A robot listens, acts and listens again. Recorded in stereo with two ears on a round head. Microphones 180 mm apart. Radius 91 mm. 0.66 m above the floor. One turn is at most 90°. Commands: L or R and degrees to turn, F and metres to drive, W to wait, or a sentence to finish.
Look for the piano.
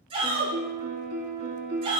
R50
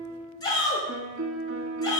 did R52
R70
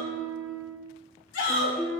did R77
Facing the piano, 1 to 2 m away.